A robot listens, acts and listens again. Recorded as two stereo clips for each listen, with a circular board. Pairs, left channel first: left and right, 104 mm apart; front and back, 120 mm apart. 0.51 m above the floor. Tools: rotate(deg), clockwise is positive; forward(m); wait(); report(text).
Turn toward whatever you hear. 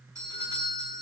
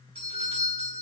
rotate(145)
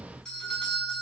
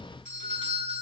report("Facing the doorbell.")